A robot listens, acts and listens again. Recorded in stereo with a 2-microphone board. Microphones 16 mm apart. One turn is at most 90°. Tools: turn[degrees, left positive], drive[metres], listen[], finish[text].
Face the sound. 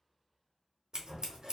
Thought: The scissors: about 50° right or 130° right.
Action: turn[-50]
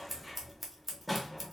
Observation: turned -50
Action: finish[Facing the scissors, under 1 m away.]